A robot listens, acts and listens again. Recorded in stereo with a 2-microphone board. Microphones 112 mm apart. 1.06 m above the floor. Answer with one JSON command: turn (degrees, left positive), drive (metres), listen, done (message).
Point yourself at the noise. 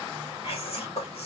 {"turn": 60}
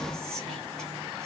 {"done": "Found it: whispering, straight ahead, 2 to 4 m away."}